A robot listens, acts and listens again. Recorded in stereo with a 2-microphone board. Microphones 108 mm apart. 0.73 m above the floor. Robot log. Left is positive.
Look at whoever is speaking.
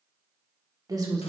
note: The woman speaking: about 40° right or 140° right.
cmd yaw -40
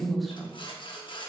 end: Found it: a woman speaking, straight ahead.